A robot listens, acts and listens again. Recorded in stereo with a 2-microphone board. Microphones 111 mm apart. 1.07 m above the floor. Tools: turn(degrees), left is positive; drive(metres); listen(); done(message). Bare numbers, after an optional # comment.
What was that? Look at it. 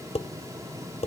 # The dishes clattering: about 70° left or 110° left.
turn(70)
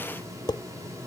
# So it is at 40° left.
turn(40)
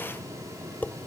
# The dishes clattering is now 15° left.
turn(15)
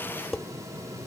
done("Facing the dishes clattering.")